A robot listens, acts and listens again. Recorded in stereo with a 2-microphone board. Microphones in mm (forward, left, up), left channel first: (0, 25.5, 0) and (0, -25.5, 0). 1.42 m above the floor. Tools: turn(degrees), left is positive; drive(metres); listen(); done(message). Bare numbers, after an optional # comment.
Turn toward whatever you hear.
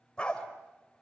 # The dog barking: about 15° left or 165° left.
turn(15)
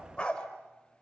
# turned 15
# The dog barking: about 20° left or 160° left.
turn(20)
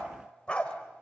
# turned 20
# The dog barking: about 20° left or 160° left.
turn(20)
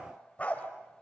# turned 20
# The dog barking: about 25° left or 155° left.
turn(25)
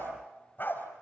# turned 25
# So it is at 140° left.
turn(140)
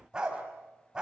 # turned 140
# The dog barking is now 15° right.
turn(-15)
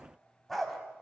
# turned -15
done("Facing the dog barking.")